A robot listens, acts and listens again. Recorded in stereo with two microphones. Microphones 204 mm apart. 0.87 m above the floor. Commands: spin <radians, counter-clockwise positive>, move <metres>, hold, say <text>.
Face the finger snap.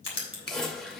spin 0.96
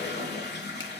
hold
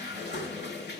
hold
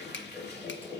say I heard a finger snap, but can't make it out now. It was about straight ahead or 70° left.